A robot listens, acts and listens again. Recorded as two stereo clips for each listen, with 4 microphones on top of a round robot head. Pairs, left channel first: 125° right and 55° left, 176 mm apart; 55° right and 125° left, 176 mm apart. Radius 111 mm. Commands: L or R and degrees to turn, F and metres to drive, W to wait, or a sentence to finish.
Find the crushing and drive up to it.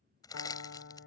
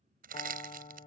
L165
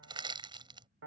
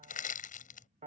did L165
R10
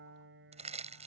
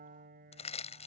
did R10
F1.0
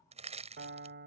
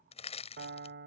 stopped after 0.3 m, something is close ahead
Something is in my way. I am facing the crushing but have not reached it.